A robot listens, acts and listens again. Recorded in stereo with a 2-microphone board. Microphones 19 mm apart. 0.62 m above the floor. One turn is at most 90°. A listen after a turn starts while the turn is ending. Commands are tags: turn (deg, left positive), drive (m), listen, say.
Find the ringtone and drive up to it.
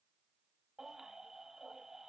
<listen/>
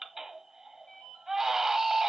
<turn deg="90"/>
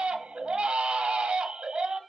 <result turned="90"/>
<listen/>
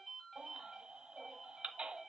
<drive m="1.0"/>
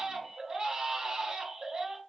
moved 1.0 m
<listen/>
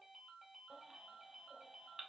<turn deg="-10"/>
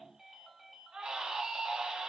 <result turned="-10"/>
<drive m="1.0"/>
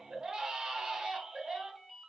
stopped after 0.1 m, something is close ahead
<say>I am next to the ringtone.</say>